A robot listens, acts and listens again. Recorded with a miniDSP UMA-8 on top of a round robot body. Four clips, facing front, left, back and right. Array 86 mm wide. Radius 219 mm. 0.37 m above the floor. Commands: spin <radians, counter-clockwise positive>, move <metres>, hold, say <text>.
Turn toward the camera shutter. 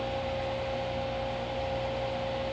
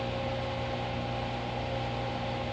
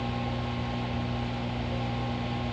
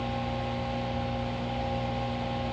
hold
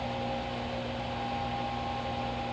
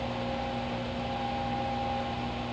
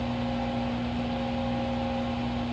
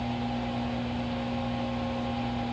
hold
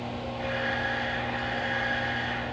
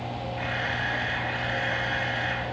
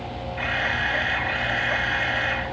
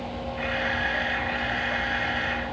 spin -3.05
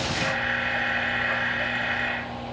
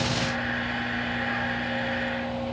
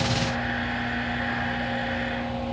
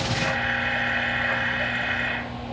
spin -1.05
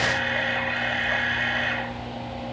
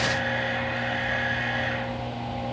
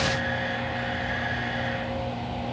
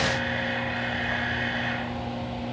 say Facing the camera shutter, over 4 m away.